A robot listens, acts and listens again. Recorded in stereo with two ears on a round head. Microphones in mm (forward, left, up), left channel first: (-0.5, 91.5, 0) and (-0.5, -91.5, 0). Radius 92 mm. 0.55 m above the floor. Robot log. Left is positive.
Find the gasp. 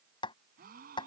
note: The gasp: about 45° right or 135° right.
cmd yaw -45
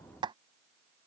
cmd idle
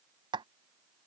end: I heard a gasp, but can't make it out now. It was about straight ahead or 90° right.